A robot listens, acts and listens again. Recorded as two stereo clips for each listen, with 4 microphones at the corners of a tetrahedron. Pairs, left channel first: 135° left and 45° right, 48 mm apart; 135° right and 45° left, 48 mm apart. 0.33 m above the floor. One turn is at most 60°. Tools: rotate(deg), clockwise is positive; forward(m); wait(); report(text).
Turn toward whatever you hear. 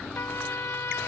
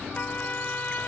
rotate(-60)
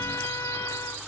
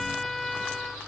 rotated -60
rotate(-60)
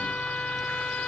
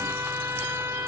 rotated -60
rotate(-60)
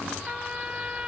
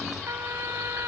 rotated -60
rotate(-25)
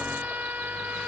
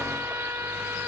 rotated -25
rotate(-10)
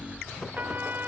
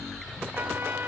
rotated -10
report("Found it: a trumpet, straight ahead.")